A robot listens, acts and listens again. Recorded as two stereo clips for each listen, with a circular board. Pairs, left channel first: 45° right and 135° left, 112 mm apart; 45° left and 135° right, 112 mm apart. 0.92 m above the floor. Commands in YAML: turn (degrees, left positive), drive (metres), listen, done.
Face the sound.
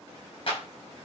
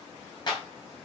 done: "Facing the clap, over 4 m away."